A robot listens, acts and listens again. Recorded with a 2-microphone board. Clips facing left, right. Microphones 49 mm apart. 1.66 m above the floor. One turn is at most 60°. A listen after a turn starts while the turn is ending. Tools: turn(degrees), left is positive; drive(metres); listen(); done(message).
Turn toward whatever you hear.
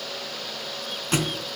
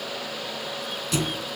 turn(degrees=35)
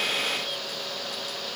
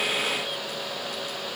listen()
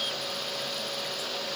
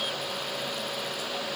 done("I heard a thud, but can't make it out now. It was about straight ahead or 110° left.")